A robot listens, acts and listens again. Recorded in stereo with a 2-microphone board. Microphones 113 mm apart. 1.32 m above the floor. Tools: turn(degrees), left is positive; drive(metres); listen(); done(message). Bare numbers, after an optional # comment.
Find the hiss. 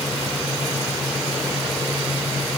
listen()
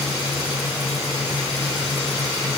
listen()
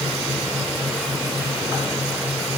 done("I can't make out a hiss.")